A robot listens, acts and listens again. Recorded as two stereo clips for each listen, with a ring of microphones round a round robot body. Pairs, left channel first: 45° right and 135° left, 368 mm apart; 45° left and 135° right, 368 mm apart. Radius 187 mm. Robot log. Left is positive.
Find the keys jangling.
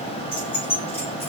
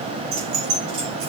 note: The keys jangling: 120° right.
cmd yaw -120
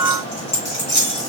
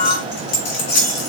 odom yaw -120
note: The keys jangling is now 20° left.
cmd yaw +20
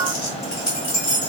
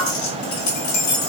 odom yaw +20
end: Facing the keys jangling, 2 to 4 m away.